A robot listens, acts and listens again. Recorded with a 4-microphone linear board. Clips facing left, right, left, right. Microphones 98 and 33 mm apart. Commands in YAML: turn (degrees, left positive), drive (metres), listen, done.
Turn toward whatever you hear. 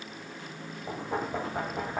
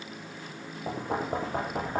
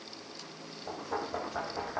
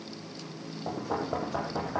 turn: -65
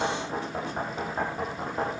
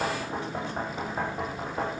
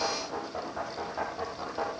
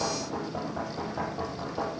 done: "Facing the knocking, over 4 m away."